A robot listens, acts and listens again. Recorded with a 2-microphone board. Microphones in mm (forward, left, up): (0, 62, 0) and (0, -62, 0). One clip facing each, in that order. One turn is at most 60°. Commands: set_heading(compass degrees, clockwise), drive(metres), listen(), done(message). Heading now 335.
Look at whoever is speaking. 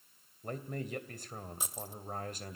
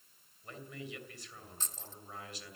set_heading(290)
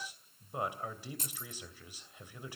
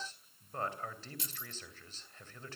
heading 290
set_heading(275)
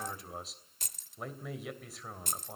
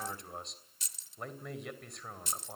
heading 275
done("Found it: a man speaking, straight ahead.")